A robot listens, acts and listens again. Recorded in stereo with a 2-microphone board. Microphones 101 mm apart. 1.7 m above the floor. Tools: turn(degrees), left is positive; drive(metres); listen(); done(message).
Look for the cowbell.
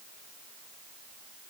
listen()
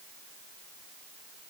listen()
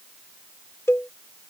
turn(degrees=25)
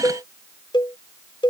turn(degrees=130)
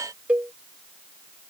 turn(degrees=-15)
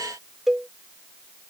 done("Found it: a cowbell, straight ahead.")